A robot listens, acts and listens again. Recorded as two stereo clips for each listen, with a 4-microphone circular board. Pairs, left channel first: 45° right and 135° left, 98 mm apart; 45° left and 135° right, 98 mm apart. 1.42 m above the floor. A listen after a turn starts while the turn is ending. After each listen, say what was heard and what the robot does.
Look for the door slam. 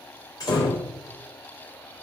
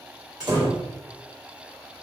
The door slam: 90° right. Turn 90° right.
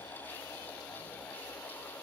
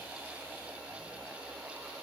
Facing where the door slam came from. I can't hear it now.